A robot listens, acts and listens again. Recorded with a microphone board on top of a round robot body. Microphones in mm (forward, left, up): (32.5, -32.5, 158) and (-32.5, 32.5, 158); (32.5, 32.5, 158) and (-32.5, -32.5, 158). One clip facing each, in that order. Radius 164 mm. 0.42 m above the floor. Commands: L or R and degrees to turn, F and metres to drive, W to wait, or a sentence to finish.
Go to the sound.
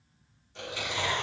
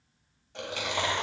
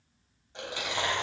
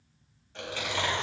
L115
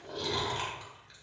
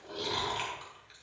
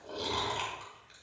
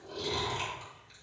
L10
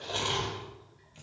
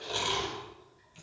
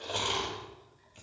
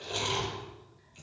F1.0
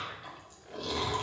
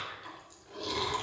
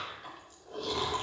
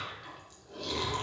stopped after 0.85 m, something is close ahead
Something is in my way. I am facing the chewing but have not reached it.